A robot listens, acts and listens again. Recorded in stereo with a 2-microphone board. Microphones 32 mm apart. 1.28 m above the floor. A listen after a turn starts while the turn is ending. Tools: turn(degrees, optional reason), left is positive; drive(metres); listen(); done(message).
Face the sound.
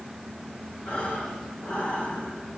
turn(degrees=45, reason="The breathing: about 45° left or 135° left.")
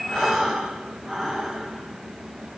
done("Found it: breathing, straight ahead.")